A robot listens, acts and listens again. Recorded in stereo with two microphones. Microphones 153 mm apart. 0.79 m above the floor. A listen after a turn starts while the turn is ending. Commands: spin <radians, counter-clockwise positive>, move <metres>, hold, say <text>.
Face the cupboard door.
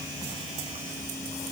hold
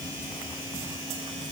hold
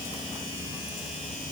say I can't make out a cupboard door to turn to.